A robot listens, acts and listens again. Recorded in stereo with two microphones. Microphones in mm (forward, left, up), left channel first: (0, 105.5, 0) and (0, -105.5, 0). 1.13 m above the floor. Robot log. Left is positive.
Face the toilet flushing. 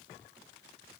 cmd idle
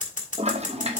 note: The toilet flushing: about 30° right or 150° right.
cmd yaw -30
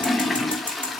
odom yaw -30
end: Found it: a toilet flushing, straight ahead.